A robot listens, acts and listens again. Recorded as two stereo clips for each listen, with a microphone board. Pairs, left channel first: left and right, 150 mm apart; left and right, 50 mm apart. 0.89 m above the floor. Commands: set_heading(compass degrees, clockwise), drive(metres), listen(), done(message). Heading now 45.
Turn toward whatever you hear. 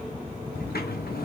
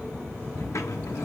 set_heading(315)
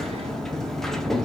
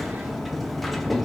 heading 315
done("Facing the sliding door, under 1 m away.")